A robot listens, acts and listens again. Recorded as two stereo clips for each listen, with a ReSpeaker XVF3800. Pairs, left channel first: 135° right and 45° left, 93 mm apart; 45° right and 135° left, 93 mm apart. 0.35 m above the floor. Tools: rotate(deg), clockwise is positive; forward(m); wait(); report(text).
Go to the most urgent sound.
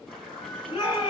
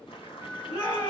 rotate(90)
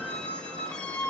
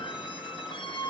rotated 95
wait()
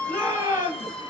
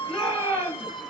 forward(1.0)
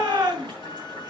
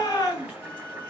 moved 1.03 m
rotate(-10)
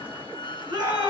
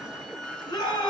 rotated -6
forward(1.0)
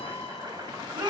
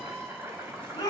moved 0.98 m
forward(1.0)
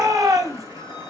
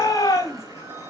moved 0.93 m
forward(1.0)
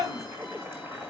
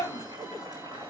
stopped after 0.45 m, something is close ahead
report("Arrived at the shout, straight ahead.")